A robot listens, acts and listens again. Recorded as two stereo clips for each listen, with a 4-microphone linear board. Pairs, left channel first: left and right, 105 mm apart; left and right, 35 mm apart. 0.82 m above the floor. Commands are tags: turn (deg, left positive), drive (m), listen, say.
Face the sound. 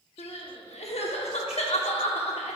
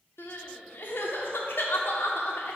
<turn deg="90"/>
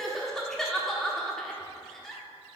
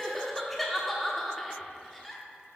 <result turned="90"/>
<say>Found it: crying, straight ahead.</say>